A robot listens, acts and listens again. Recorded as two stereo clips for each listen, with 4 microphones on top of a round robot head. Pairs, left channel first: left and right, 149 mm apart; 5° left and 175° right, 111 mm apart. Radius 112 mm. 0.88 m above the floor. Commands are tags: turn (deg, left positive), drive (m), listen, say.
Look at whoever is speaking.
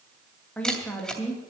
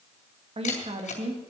<turn deg="170"/>
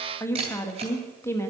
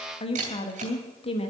<turn deg="20"/>
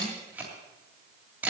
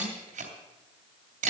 <listen/>
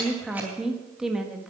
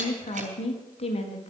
<say>Facing the woman speaking.</say>